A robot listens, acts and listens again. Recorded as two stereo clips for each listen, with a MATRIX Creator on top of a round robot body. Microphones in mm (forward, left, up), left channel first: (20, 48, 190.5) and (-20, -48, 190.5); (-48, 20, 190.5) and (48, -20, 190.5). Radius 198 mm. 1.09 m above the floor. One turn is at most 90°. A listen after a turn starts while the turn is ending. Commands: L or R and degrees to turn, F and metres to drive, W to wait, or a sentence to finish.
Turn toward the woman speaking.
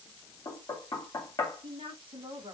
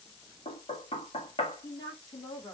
R90
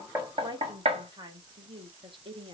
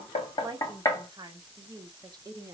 R75
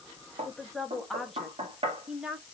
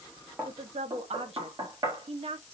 R30
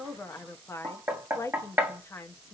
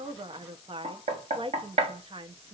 Found it: a woman speaking, straight ahead, 1 to 2 m away.